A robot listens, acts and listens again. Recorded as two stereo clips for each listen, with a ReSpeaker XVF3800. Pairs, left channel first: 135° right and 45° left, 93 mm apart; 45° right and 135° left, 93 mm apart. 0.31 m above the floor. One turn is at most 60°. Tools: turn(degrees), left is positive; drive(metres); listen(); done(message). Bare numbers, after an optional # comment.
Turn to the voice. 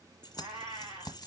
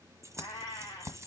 listen()
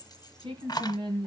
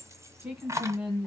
# The woman speaking: 55° left.
turn(55)
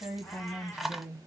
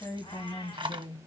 # The woman speaking is now 25° right.
turn(-25)
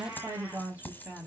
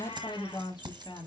# The woman speaking is now 30° right.
turn(-30)
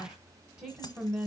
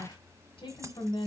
# The woman speaking is now 20° right.
turn(-20)
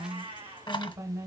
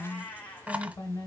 done("Found it: a woman speaking, straight ahead.")